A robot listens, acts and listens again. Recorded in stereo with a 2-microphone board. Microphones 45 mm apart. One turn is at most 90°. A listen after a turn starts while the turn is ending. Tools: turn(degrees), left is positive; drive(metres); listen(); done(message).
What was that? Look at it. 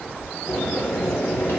turn(degrees=65)
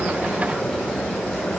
done("Found it: boiling, straight ahead, under 1 m away.")